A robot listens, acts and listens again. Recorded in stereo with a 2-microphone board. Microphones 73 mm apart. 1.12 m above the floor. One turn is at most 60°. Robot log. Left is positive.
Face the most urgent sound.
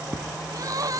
note: The crying: about 50° right or 130° right.
cmd yaw -50
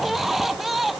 end: Found it: crying, straight ahead.